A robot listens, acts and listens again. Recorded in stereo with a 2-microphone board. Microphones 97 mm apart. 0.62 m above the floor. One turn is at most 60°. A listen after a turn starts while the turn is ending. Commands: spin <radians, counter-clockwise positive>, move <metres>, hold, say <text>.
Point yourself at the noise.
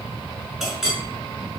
spin -0.52
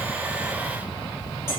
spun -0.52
hold
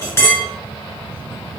spin 0.44
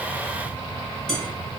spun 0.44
say Found it: a clink, straight ahead, 1 to 2 m away.